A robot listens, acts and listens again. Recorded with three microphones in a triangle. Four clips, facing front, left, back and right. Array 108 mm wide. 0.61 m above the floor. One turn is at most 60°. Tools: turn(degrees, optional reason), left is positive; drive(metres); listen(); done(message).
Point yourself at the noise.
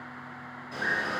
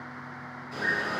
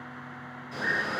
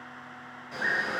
turn(degrees=-60, reason="The bird: 60° right.")
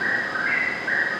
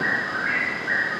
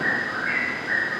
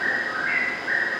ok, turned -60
turn(degrees=-20, reason="The bird is now 20° right.")
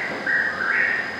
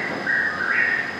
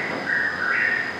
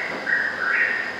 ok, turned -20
done("Found it: a bird, straight ahead.")